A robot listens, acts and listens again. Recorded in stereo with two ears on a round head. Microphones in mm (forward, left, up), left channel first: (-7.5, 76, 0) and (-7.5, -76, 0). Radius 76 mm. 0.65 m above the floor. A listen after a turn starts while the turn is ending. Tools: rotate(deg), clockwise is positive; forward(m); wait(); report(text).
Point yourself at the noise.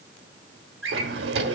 rotate(90)
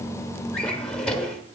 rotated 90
report("Facing the drawer, 1 to 2 m away.")